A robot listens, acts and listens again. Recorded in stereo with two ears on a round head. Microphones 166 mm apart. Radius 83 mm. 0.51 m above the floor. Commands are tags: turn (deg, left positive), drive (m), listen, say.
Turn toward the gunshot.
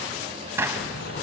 <turn deg="-30"/>
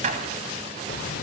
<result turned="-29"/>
<turn deg="-135"/>
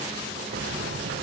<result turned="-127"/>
<turn deg="-10"/>
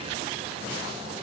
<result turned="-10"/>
<say>Facing where the gunshot came from. I can't hear it now.</say>